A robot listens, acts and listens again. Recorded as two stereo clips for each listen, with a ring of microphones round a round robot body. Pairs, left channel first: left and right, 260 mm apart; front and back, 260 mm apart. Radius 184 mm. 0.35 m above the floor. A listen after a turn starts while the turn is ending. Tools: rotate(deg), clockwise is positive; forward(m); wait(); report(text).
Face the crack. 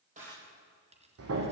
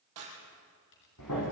rotate(165)
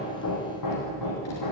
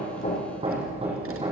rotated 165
report("I heard a crack from this way, but can't make it out now.")